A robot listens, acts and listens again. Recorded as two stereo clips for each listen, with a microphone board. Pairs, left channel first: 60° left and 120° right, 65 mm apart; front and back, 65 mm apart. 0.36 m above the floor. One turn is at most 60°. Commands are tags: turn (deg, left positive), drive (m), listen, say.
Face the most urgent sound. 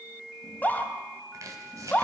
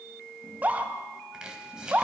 <turn deg="60"/>
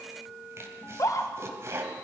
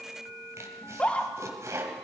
<turn deg="60"/>
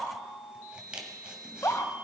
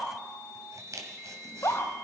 <turn deg="30"/>
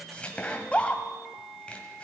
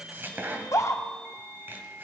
<say>Found it: a scream, straight ahead, 1 to 2 m away.</say>